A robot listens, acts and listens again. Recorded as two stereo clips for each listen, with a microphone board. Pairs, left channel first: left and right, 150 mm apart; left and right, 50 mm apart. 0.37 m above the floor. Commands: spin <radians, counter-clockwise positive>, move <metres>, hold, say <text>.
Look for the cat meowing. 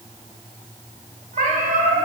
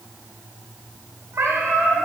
spin -1.22
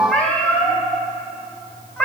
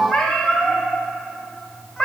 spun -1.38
spin 0.17
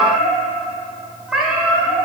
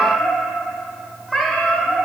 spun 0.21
say Found it: a cat meowing, straight ahead.